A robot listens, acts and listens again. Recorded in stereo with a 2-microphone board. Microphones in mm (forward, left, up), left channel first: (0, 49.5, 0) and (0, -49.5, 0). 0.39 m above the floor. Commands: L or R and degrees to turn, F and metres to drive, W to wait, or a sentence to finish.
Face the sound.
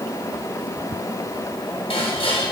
L65
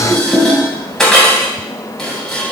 Facing the dishes clattering, 1 to 2 m away.